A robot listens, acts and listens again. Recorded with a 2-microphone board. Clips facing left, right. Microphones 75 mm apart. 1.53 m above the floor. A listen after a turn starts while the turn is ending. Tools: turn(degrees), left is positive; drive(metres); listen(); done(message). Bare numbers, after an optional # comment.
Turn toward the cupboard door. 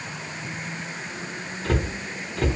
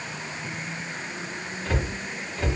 # The cupboard door: about 65° left or 115° left.
turn(65)
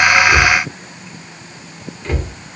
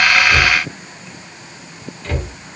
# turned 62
# So it is at 15° left.
turn(15)
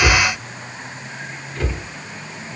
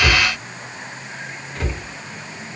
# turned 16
done("Found it: a cupboard door, straight ahead, 1 to 2 m away.")